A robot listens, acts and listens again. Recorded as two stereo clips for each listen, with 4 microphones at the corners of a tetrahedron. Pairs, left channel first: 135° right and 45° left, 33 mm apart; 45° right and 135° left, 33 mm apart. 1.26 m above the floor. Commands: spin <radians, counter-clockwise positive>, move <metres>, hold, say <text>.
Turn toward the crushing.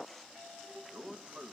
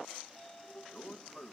hold
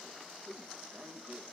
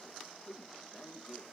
hold
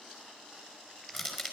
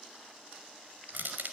spin 2.27
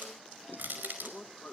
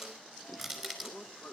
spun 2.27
spin 0.70
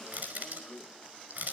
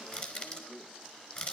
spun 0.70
say Facing the crushing.